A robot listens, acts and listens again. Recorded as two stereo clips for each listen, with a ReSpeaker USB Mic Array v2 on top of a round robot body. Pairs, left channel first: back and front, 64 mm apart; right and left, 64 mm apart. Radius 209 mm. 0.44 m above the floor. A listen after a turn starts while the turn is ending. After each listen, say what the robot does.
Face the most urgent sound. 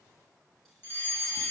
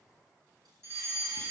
Turn 130° left.
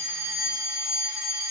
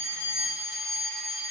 Found it: a fire alarm, straight ahead, 2 to 4 m away.